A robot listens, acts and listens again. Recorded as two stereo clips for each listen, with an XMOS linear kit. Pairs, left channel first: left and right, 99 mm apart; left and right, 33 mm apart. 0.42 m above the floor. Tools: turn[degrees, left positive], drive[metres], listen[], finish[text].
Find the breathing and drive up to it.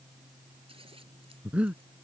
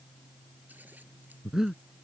Action: turn[-30]
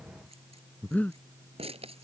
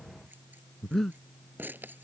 Thought: So it is at 15° left.
Action: turn[15]
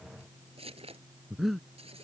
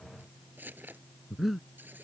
Action: drive[1.0]
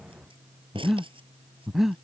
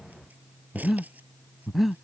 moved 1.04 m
Action: drive[1.0]
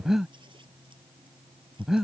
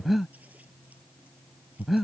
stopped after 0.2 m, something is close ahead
Action: finish[Arrived at the breathing, straight ahead.]